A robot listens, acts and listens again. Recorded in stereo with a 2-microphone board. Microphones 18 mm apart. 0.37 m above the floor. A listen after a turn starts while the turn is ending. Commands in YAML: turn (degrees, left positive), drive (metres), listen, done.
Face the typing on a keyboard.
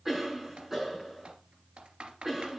turn: -90
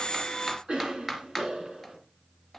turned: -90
done: "Found it: typing on a keyboard, straight ahead."